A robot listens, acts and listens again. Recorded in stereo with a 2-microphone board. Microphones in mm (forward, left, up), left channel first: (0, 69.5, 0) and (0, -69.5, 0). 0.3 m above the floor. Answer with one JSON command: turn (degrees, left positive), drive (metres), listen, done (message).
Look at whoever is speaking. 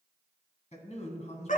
{"turn": 50}
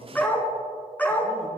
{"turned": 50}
{"listen": true}
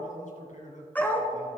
{"turn": 70}
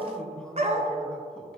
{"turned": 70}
{"listen": true}
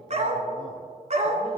{"listen": true}
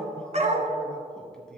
{"done": "Facing where the man speaking came from. I can't hear it now."}